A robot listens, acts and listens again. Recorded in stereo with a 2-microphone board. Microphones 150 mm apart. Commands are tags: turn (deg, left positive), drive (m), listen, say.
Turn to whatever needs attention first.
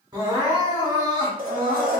<turn deg="-30"/>
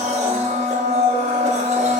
<listen/>
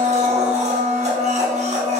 <listen/>
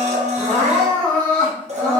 <say>Found it: crying, straight ahead, 1 to 2 m away.</say>